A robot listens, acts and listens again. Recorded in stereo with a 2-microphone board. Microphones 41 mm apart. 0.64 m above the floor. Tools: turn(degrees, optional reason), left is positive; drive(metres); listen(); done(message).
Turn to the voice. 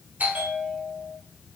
listen()
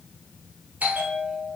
listen()
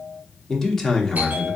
turn(degrees=30)
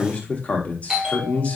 turn(degrees=140, reason="So it is at 140° left.")
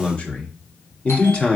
turn(degrees=35, reason="The man speaking is now 35° left.")
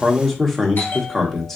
done("Found it: a man speaking, straight ahead.")